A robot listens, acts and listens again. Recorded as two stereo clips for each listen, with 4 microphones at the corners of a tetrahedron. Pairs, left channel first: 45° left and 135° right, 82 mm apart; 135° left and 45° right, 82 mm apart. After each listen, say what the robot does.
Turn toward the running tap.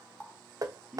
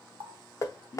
Turn 40° right.
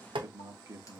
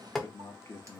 Keep listening.
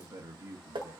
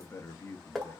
Keep listening.
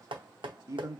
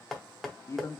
I heard a running tap from this way, but can't make it out now.